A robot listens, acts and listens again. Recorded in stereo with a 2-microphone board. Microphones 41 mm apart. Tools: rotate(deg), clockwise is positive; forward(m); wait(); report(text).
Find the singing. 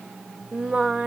rotate(30)
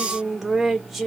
report("Found it: singing, straight ahead, under 1 m away.")